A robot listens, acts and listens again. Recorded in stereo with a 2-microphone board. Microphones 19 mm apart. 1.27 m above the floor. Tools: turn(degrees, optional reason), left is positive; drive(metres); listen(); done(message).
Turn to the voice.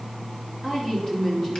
turn(degrees=30, reason="The woman speaking: about 30° left or 150° left.")
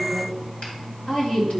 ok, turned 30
turn(degrees=115, reason="So it is at 115° left.")
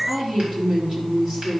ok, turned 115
turn(degrees=-15, reason="The woman speaking is now 15° right.")
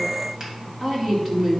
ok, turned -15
done("Facing the woman speaking, 2 to 4 m away.")